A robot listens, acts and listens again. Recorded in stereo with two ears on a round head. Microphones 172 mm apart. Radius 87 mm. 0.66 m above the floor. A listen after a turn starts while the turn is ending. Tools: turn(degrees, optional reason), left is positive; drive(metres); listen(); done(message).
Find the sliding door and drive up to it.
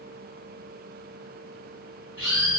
listen()
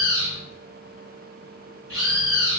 listen()
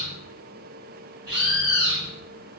done("I can't make out a sliding door to turn to.")